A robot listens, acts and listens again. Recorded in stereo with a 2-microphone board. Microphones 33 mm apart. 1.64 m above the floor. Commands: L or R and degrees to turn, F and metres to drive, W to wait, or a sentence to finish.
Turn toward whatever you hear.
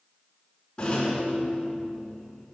L25
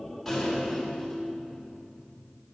Found it: a rattle, straight ahead, over 4 m away.